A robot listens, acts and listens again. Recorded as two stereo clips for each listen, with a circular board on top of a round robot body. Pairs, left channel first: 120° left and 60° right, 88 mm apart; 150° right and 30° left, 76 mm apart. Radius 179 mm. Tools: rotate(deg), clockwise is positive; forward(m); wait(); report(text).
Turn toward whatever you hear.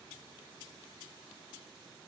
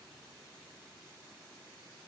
wait()
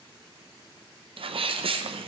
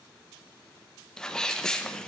rotate(70)
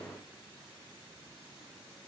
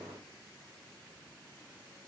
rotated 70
report("Facing where the sneeze came from. I can't hear it now.")